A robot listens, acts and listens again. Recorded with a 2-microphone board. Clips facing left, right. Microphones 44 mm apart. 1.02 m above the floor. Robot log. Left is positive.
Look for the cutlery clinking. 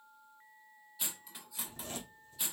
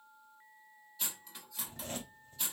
cmd yaw +30
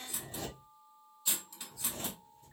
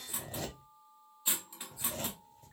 note: So it is at 25° right.
cmd yaw -25
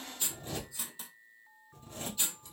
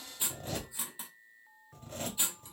note: The cutlery clinking is now 20° right.
cmd yaw -20
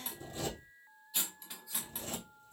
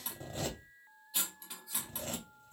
end: Found it: cutlery clinking, straight ahead.